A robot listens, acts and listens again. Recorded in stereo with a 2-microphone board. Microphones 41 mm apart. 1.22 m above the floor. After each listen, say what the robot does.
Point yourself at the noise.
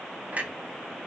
Turn 40° right.
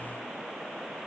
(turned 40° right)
Keep listening.
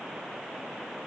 I heard a clunk, but can't make it out now. It was about straight ahead or 100° right.